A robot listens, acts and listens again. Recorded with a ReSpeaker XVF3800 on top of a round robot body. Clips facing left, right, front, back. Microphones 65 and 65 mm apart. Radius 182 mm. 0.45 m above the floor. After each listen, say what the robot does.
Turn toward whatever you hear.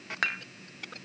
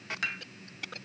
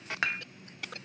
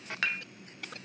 Turn 65° left.
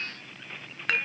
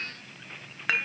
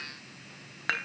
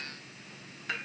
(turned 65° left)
Facing the dishes clattering.